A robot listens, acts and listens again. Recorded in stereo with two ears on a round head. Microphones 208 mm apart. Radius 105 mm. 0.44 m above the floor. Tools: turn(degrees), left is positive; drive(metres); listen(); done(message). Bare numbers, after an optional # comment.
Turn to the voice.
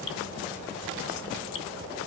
listen()
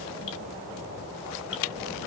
listen()
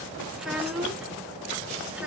turn(-30)
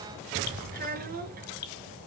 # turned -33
# So it is at 140° right.
turn(-140)
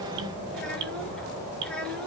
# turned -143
listen()
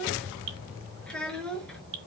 done("Found it: a child speaking, straight ahead.")